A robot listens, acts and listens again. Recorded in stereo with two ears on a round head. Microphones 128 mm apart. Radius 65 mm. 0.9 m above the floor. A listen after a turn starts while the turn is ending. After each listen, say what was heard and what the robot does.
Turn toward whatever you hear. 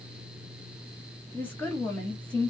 Turn 30° left.
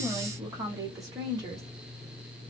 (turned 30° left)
So it is at 25° right. Turn 25° right.
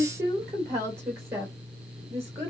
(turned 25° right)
The woman speaking is now 20° right. Turn 20° right.
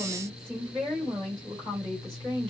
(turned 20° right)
Facing the woman speaking.